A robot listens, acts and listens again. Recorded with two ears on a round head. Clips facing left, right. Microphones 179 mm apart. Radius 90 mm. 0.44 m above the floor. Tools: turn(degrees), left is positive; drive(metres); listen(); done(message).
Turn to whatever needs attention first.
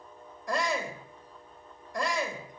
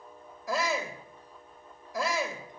turn(degrees=30)
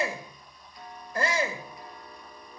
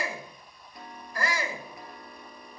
turn(degrees=150)
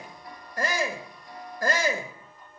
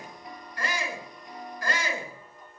turn(degrees=45)
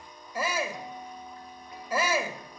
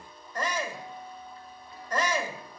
turn(degrees=10)
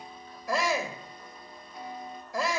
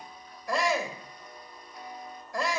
done("Facing the shout.")